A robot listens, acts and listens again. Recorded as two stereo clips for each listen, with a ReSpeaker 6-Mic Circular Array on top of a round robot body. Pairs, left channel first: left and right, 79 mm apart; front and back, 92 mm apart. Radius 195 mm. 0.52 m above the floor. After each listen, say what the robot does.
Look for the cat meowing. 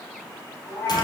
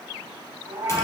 Turn 155° left.
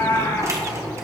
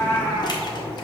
Turn 65° left.
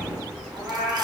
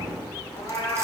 Turn 10° right.
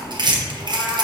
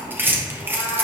Keep listening.
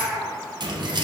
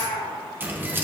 Facing the cat meowing.